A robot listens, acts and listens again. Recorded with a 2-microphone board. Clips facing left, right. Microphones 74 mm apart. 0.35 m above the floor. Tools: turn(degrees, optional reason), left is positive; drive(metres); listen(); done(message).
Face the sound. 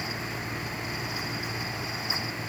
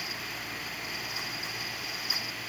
listen()
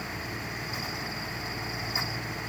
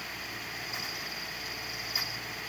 listen()
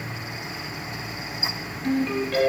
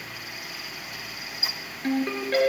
turn(degrees=-40, reason="The ringtone: about 40° right or 140° right.")
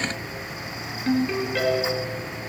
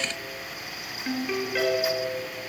done("Facing the ringtone, 2 to 4 m away.")